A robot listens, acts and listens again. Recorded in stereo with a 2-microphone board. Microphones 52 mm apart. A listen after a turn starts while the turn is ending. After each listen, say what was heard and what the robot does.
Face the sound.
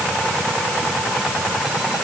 Keep listening.
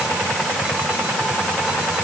Keep listening.
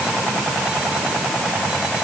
I can't make out anything.